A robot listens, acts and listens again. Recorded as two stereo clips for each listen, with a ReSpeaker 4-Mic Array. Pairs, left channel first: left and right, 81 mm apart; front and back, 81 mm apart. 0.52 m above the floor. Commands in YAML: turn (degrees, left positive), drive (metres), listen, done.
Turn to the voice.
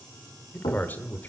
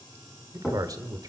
turn: 155
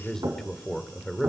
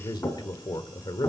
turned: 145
done: "Facing the man speaking, 1 to 2 m away."